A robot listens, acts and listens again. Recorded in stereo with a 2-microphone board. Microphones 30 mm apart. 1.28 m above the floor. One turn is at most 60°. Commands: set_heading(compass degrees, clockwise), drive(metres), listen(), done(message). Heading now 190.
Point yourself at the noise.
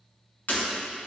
set_heading(130)
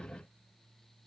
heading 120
listen()
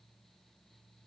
done("I heard breaking glass, but can't make it out now. It was about straight ahead or 40° left.")